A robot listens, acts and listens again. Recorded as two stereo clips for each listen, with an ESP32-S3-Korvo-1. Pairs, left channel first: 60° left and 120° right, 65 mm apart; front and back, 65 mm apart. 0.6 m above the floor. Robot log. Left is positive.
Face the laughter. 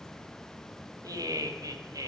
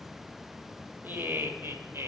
note: The laughter: 135° right.
cmd yaw -135
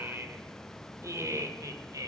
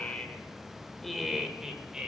note: The laughter is now 105° right.
cmd yaw -105
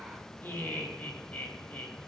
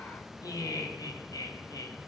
end: Facing the laughter.